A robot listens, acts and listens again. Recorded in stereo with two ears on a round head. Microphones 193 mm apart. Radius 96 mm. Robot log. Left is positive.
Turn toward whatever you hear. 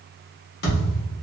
note: The thud: about 50° left or 130° left.
cmd yaw +50
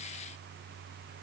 cmd idle
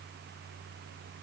end: I heard a thud, but can't make it out now. It was about straight ahead or 80° left.